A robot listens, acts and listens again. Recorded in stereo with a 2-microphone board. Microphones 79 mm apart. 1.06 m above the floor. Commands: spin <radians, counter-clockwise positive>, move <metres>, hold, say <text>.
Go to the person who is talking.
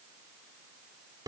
hold
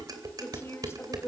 spin 0.61
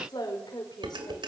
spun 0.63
spin 1.92
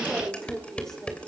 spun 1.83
move 1.0
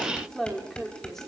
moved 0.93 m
move 1.0
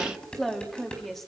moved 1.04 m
move 1.0
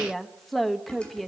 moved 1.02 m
move 1.0
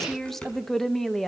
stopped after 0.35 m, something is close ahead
say I am next to the woman speaking.